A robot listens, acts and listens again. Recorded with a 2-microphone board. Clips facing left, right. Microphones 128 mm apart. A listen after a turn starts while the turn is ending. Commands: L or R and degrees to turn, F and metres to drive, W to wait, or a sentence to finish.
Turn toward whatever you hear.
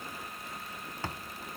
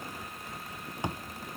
R15
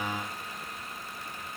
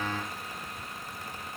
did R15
W
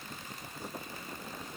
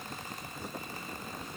I heard a thud, but can't make it out now. It was about straight ahead or 150° right.